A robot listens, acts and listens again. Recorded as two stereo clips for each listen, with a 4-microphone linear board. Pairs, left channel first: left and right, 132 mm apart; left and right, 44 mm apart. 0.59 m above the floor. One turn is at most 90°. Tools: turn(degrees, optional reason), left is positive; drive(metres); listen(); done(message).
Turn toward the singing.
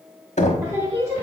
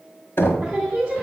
turn(degrees=-20, reason="The singing: about 20° right or 160° right.")
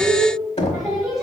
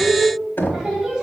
turn(degrees=-30)
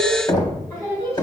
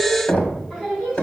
turn(degrees=25, reason="So it is at 25° left.")
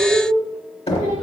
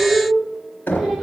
done("Found it: singing, straight ahead.")